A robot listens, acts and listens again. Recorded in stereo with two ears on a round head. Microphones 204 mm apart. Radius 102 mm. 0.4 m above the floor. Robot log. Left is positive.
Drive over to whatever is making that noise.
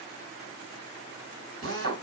note: The drill: about 65° right or 115° right.
cmd yaw -65
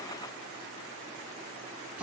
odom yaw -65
note: So it is at 10° right.
cmd yaw -10
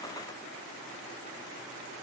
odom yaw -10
cmd idle
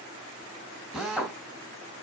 cmd fwd 1.0
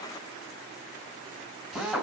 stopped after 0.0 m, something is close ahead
end: Something is in my way. I am facing the drill but have not reached it.